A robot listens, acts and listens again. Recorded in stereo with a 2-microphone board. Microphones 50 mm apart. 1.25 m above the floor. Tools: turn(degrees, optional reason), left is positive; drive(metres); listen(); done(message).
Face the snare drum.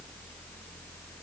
listen()
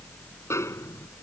turn(degrees=70, reason="The snare drum: about 70° left or 110° left.")
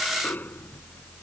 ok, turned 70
listen()
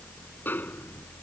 turn(degrees=40, reason="So it is at 40° left.")
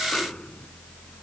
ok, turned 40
listen()
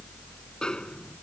turn(degrees=15, reason="The snare drum is now 15° left.")
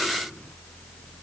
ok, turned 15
listen()
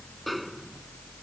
done("Facing the snare drum.")